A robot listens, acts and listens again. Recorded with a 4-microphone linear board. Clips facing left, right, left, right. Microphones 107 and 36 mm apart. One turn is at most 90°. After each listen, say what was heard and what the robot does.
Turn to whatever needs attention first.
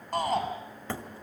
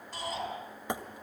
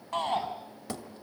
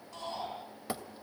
The shout: about 55° left or 125° left. Turn 55° left.
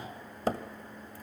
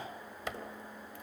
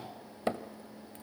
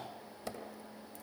Keep listening.
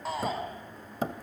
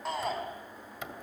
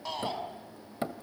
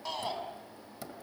Found it: a shout, straight ahead.